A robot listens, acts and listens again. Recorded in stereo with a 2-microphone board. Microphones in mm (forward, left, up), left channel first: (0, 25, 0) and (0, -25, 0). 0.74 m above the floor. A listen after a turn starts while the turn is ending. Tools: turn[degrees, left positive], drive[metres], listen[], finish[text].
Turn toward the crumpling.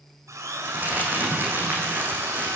Thought: The crumpling: about 35° right or 145° right.
Action: turn[-35]
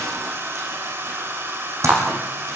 Thought: So it is at 105° right.
Action: turn[-105]
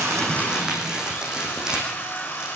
Thought: The crumpling is now 15° right.
Action: turn[-15]
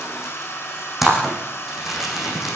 Action: finish[Facing the crumpling.]